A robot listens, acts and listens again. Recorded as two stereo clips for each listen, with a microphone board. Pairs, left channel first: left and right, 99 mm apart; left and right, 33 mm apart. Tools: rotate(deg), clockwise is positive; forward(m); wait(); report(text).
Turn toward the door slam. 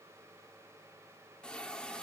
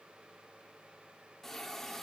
wait()
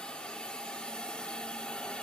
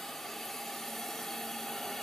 wait()
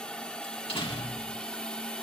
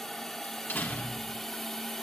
rotate(-70)
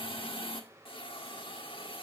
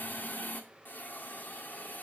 wait()
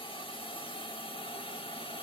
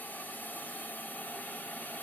report("I heard a door slam, but can't make it out now. It was about straight ahead or 40° left.")